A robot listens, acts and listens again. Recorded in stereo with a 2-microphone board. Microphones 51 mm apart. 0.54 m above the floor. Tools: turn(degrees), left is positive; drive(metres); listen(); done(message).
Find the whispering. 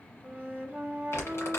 listen()
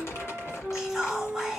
turn(degrees=-30)
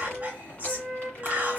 turn(degrees=-140)
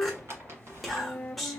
done("Found it: whispering, straight ahead.")